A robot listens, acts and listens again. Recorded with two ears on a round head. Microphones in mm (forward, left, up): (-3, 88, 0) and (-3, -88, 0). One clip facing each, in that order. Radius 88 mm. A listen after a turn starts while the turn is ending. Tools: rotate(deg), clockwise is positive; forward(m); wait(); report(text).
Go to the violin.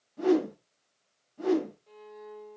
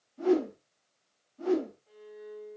rotate(-50)
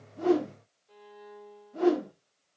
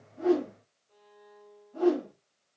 rotate(-80)
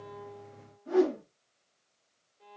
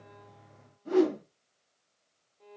forward(1.0)
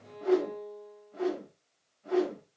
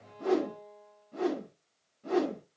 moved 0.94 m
rotate(-10)
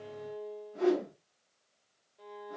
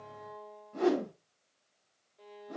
forward(1.0)
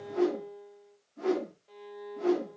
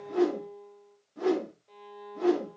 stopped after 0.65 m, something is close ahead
report("I am next to the violin.")